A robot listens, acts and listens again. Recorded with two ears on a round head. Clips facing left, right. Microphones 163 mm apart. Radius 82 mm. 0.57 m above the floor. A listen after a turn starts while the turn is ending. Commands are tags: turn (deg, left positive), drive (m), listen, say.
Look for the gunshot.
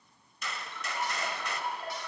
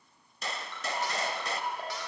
<turn deg="-30"/>
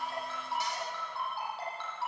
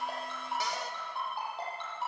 <listen/>
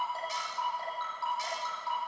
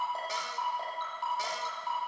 <say>I heard a gunshot, but can't make it out now. It was about straight ahead or 120° right.</say>